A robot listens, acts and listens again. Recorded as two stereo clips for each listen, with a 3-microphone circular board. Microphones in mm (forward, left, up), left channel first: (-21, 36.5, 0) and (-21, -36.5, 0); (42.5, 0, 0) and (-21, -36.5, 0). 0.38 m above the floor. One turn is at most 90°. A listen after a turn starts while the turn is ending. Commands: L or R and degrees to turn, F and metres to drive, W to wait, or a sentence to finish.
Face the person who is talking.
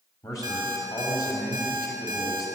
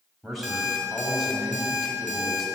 L90
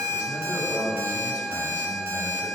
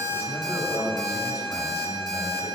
L30
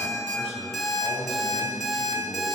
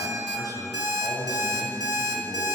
Facing the man speaking, 1 to 2 m away.